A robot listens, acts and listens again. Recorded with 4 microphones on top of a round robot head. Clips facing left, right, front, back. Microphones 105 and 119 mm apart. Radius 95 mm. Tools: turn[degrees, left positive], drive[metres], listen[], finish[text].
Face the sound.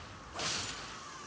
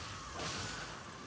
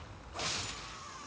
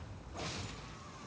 Action: listen[]
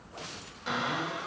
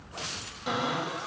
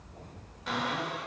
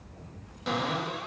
Thought: The cupboard door: 150° right.
Action: turn[-150]
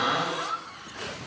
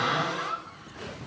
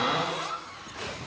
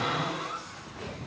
Thought: The cupboard door is now 15° left.
Action: turn[15]
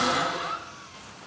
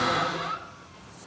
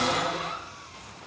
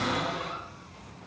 Action: finish[Found it: a cupboard door, straight ahead.]